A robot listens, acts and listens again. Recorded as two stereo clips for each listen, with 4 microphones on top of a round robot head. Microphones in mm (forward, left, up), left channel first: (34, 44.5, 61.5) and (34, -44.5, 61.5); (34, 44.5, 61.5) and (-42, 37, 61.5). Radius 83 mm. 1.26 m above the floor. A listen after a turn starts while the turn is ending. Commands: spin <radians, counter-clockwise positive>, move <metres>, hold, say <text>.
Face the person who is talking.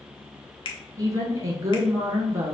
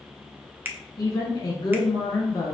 spin -0.52
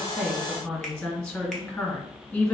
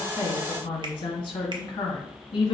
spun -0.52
spin 0.35
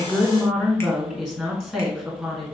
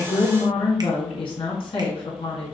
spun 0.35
say Found it: a woman speaking, straight ahead.